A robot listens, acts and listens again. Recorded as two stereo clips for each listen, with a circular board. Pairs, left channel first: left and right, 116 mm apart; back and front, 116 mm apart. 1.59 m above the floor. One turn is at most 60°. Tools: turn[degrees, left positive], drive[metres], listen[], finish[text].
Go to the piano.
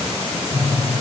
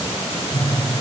Thought: The piano: 125° left.
Action: turn[60]
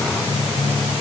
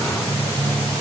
Thought: The piano is now 75° left.
Action: turn[60]
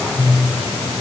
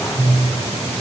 Thought: The piano is now 20° left.
Action: turn[20]
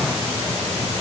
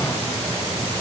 Action: listen[]
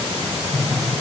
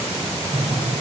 Action: drive[1.0]
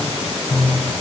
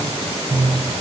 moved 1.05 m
Action: drive[1.0]
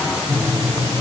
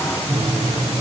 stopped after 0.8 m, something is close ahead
Thought: The piano is now 10° right.
Action: turn[-10]
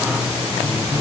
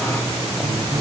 Action: finish[I am next to the piano.]